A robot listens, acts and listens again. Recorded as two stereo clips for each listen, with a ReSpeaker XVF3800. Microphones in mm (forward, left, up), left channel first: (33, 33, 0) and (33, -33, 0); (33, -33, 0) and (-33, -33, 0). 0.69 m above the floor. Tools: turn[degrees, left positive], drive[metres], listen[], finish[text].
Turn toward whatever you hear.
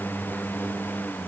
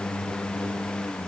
Action: listen[]
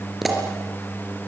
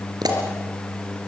Thought: The pop: 175° right.
Action: turn[-175]
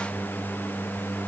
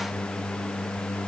Action: finish[Facing where the pop came from. I can't hear it now.]